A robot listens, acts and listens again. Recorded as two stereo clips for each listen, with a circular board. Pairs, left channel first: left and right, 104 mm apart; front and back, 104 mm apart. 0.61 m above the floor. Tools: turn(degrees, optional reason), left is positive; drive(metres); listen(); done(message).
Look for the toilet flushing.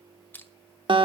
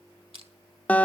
listen()
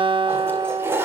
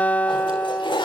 turn(degrees=-25, reason="The toilet flushing: 25° right.")
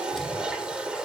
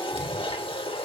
turn(degrees=-10, reason="The toilet flushing is now 10° right.")
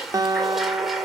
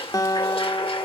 done("Found it: a toilet flushing, straight ahead.")